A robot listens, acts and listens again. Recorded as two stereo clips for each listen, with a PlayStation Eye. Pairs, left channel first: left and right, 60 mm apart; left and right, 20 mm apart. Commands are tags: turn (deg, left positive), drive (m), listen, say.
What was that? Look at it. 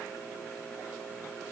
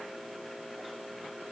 <listen/>
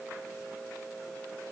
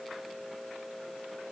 <listen/>
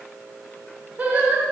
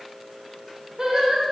<turn deg="-30"/>
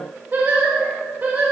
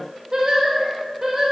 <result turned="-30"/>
<turn deg="-30"/>
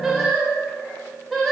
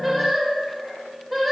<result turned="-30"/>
<say>Found it: singing, straight ahead, 1 to 2 m away.</say>